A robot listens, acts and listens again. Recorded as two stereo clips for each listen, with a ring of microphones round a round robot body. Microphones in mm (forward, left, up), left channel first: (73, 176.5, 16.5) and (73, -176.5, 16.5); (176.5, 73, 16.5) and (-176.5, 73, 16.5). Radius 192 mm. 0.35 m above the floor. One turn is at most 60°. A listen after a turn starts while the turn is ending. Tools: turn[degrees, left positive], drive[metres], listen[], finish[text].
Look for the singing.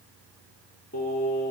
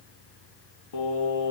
Thought: The singing: 30° left.
Action: turn[30]
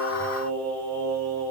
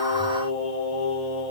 Thought: The singing is now 10° left.
Action: turn[10]
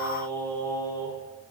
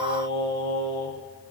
Thought: The singing is now 10° left.
Action: turn[10]
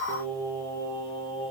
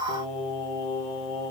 Thought: The singing is now 15° left.
Action: turn[15]
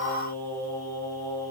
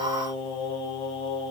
Thought: The singing is now 10° left.
Action: turn[10]
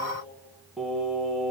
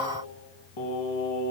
Action: finish[Facing the singing, 2 to 4 m away.]